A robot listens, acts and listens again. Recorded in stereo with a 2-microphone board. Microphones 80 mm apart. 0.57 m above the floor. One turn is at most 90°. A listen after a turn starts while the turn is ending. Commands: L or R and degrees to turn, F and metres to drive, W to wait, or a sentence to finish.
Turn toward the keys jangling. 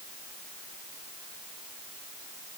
W
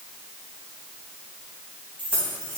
L15
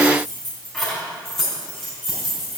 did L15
R30
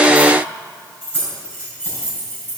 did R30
L25
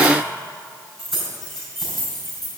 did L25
Facing the keys jangling.